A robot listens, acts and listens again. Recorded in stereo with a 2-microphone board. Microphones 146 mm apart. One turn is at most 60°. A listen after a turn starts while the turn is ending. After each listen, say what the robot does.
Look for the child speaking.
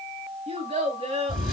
Turn 45° right.
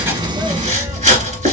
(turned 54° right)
Keep listening.
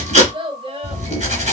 Turn 40° right.
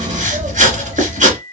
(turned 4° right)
Turn 35° right.
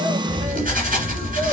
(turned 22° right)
Turn 15° right.
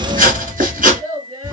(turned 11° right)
Turn 60° right.
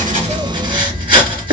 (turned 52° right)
Turn 10° right.
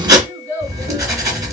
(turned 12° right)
Turn 15° right.
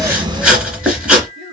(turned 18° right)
Keep listening.
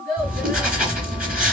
Facing the child speaking.